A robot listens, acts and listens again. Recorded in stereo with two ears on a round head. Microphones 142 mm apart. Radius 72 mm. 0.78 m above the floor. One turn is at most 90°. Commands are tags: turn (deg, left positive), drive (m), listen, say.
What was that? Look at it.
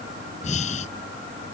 <turn deg="45"/>
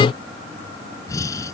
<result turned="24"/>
<turn deg="20"/>
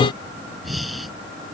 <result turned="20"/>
<say>Found it: breathing, straight ahead.</say>